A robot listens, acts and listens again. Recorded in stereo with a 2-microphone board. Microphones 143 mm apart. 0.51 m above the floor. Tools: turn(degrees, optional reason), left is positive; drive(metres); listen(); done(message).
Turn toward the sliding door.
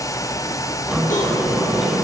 turn(degrees=-30)
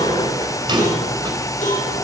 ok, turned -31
turn(degrees=-140, reason="So it is at 140° right.")
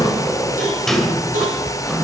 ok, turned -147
done("Found it: a sliding door, straight ahead, 2 to 4 m away.")